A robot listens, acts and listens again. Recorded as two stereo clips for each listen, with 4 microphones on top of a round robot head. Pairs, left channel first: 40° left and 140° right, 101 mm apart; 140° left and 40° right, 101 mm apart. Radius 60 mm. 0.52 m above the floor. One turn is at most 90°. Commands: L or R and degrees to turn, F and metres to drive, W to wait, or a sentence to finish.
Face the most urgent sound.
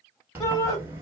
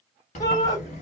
L90
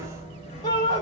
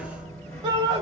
Found it: a shout, straight ahead, 1 to 2 m away.